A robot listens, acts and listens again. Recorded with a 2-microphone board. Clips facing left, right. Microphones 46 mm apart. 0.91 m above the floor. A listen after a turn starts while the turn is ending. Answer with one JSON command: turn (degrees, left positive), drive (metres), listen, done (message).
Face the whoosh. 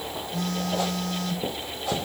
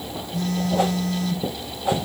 {"turn": -20}
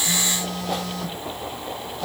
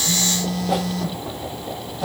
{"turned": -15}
{"done": "Facing the whoosh, 1 to 2 m away."}